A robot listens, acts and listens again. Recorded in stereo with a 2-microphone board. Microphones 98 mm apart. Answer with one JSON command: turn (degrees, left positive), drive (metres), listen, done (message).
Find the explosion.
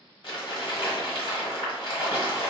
{"listen": true}
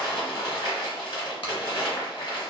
{"listen": true}
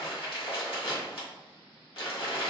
{"done": "I can't make out an explosion to turn to."}